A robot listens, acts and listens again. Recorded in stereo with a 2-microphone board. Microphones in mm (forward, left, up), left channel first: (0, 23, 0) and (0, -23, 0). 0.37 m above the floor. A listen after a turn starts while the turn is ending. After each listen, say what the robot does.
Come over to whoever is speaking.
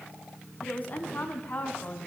Turn 35° left.
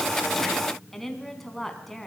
Drive 1.0 m forward.
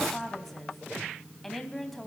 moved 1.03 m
Drive 1.0 m forward.
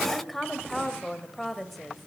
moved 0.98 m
Drive 1.0 m forward.
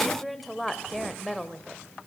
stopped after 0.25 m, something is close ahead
Arrived at the woman speaking, straight ahead.